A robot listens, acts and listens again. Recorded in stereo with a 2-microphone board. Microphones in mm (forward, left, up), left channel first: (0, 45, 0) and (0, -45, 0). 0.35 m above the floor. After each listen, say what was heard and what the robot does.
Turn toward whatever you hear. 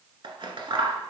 The scissors: about 70° right or 110° right. Turn 70° right.
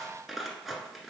Facing the scissors.